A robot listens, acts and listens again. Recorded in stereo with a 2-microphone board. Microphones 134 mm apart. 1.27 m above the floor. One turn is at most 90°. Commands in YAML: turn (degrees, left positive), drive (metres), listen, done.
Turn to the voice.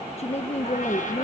turn: 50
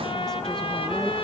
listen: true
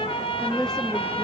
done: "Found it: a woman speaking, straight ahead, 1 to 2 m away."